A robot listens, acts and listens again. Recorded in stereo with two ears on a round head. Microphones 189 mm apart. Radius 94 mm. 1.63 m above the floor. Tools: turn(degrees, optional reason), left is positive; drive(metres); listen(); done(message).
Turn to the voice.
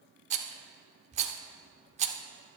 listen()
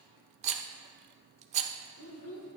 turn(degrees=90)
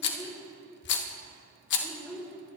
done("Found it: a child speaking, straight ahead.")